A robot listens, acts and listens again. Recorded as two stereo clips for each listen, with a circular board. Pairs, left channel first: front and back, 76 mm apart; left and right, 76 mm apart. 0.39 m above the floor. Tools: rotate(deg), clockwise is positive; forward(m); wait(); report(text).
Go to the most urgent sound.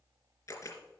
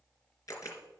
wait()
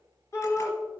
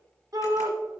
rotate(50)
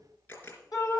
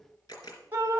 rotate(35)
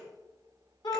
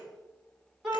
rotate(10)
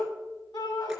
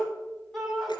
forward(1.0)
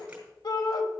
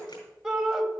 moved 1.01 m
rotate(10)
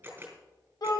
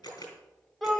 forward(1.0)
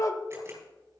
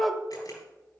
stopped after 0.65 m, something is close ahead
report("I am next to the shout.")